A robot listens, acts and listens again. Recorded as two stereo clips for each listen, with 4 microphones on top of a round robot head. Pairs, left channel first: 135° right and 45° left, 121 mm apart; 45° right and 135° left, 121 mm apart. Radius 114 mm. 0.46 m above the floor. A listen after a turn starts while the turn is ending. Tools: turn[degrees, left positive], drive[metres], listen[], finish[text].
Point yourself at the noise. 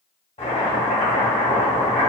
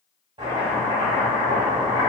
Thought: The chopping: 170° right.
Action: turn[-170]
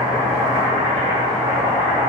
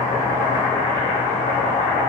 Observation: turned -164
Thought: The chopping is now 10° right.
Action: turn[-10]
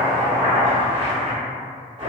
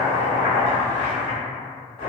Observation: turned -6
Action: finish[Found it: chopping, straight ahead, 1 to 2 m away.]